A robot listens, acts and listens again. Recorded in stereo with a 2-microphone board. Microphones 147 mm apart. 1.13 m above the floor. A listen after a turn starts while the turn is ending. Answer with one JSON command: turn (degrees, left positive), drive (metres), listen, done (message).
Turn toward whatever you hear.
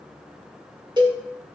{"turn": -30}
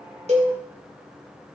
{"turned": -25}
{"listen": true}
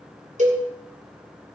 {"turn": -125}
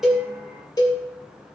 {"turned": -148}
{"turn": 25}
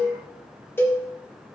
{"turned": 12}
{"turn": 15}
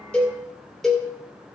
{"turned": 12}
{"done": "Facing the cowbell, 2 to 4 m away."}